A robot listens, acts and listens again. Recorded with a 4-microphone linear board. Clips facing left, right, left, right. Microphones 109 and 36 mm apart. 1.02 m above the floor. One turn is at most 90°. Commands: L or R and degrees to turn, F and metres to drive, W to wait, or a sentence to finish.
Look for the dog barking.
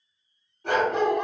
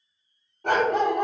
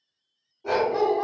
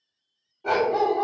R50
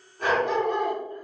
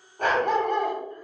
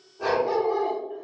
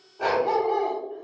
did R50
R65
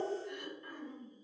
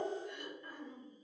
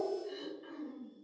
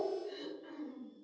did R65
W
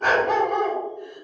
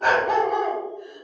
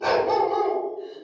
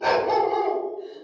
Facing the dog barking.